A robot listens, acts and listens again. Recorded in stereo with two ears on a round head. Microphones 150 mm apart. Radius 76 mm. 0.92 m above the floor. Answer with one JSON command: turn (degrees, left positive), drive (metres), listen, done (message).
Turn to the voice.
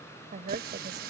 {"turn": -50}
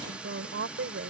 {"turn": -70}
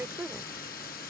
{"turn": -10}
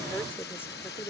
{"turn": 15}
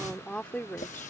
{"turn": 10}
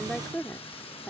{"done": "Facing the woman speaking."}